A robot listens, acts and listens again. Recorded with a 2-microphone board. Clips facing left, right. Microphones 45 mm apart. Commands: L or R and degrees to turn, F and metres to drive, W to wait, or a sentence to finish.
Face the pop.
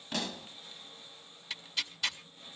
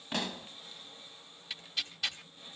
R20
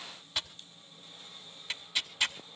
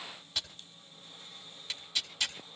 W
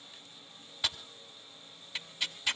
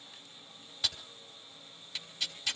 I heard a pop, but can't make it out now. It was about straight ahead or 140° right.